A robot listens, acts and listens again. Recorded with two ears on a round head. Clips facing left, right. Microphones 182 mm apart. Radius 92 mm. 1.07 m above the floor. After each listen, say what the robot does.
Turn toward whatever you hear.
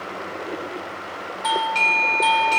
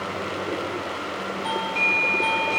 Turn 60° left.
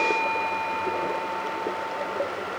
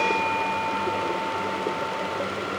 Turn 30° left.
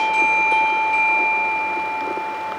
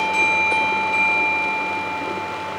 Turn 15° right.
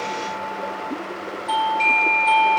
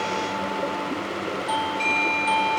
Facing the doorbell, 1 to 2 m away.